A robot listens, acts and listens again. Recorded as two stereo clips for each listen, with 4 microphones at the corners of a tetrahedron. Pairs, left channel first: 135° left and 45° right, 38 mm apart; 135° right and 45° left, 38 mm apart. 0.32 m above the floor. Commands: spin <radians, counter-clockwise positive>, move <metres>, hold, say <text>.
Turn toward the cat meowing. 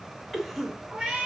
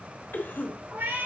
spin 0.61
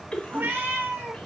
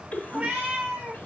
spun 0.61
say Facing the cat meowing, 2 to 4 m away.